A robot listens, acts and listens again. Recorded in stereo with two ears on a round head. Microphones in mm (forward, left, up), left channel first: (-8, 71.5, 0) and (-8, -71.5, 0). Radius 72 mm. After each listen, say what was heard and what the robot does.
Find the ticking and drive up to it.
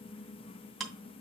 Turn 30° left.
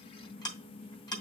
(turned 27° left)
So it is at 150° left. Turn 150° left.
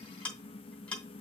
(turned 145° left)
Drive 1.0 m forward.
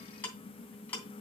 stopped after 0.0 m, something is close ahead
The ticking is now 10° left. Turn 10° left.
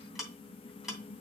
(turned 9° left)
Blocked. The ticking is further on, straight ahead.